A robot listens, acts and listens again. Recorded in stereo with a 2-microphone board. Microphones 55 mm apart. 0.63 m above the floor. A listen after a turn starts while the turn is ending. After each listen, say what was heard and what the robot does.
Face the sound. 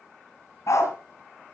The dog barking: about 65° left or 115° left. Turn 65° left.
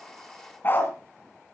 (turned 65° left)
So it is at 30° left. Turn 30° left.
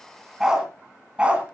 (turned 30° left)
The dog barking is now 20° right. Turn 20° right.
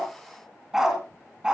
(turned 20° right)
The dog barking is now 15° right. Turn 15° right.
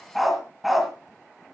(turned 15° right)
Facing the dog barking.